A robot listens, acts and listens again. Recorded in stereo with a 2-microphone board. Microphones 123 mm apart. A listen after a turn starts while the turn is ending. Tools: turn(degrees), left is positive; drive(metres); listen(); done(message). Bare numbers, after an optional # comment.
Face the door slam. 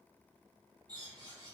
listen()
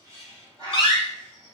# The door slam: about 40° left or 140° left.
turn(40)
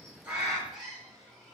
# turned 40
listen()
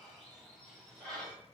done("I heard a door slam, but can't make it out now. It was about straight ahead or 100° left.")